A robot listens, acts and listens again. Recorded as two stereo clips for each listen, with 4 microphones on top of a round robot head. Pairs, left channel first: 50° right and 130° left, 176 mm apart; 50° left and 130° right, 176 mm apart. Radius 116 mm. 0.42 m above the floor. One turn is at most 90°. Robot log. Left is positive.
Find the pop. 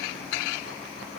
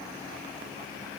cmd idle
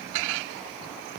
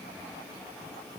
cmd idle
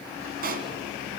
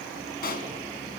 note: The pop: 90° left.
cmd yaw +90
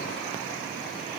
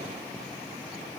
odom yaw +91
end: Facing where the pop came from. I can't hear it now.